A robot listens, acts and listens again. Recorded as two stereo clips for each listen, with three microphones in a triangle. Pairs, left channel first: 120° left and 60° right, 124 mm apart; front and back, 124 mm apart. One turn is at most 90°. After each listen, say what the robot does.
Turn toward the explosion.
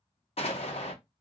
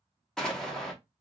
Turn 85° left.
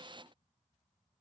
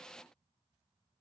I heard an explosion from this way, but can't make it out now.